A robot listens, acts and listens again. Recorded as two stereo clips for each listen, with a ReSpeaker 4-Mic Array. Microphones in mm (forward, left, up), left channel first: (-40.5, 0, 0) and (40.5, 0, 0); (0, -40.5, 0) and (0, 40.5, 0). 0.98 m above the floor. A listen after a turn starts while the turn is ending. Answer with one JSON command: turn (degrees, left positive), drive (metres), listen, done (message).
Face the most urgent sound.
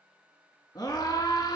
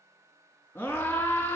{"turn": -145}
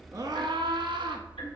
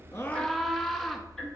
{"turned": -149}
{"done": "Found it: a scream, straight ahead, 1 to 2 m away."}